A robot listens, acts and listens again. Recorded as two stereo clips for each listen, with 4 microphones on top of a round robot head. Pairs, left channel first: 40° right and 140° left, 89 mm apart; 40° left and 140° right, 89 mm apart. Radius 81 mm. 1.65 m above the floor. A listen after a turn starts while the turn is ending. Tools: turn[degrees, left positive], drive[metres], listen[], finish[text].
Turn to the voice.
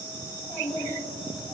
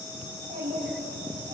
Thought: The child speaking: 125° right.
Action: turn[-125]
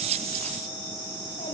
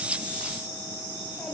Thought: The child speaking is now 40° right.
Action: turn[-40]
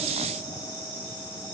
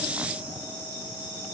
Action: listen[]
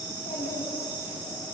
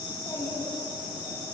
Thought: The child speaking is now 20° right.
Action: turn[-20]
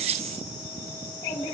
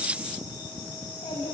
Action: finish[Facing the child speaking, over 4 m away.]